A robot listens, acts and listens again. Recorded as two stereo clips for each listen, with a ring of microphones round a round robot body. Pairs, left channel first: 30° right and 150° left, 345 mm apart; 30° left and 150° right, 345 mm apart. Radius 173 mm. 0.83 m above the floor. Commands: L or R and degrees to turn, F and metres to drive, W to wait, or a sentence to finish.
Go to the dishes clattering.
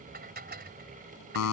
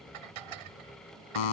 R145
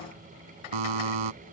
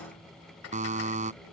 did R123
R25
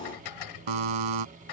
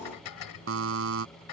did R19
F1.0
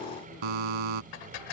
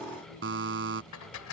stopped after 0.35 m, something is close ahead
R15
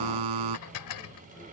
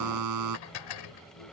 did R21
Blocked. The dishes clattering is further on, straight ahead.